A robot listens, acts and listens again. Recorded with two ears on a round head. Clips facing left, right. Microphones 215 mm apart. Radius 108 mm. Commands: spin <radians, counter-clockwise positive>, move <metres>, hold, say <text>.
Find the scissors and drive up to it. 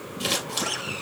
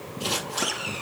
spin 1.22
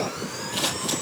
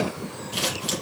move 1.0
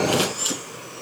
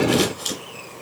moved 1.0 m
spin 0.17
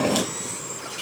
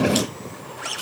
move 1.0
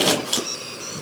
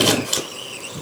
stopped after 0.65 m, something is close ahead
say Arrived at the scissors, straight ahead.